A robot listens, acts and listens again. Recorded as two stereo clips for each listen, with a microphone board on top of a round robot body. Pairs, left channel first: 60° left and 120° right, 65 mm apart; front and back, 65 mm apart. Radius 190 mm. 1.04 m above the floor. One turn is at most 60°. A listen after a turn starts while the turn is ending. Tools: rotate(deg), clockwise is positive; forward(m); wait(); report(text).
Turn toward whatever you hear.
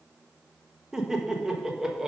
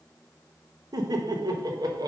rotate(-60)
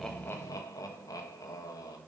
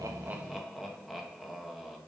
rotate(-60)
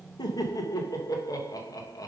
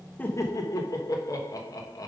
rotate(-35)
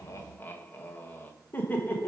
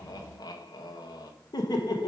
report("Facing the laughter.")